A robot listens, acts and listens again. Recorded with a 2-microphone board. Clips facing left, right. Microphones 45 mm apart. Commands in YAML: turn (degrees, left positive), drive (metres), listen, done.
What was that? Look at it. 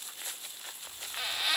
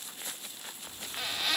turn: 30
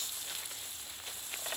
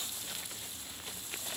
turn: 140
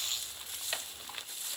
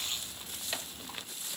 turn: 10
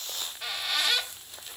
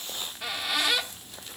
done: "Found it: a squeak, straight ahead, 1 to 2 m away."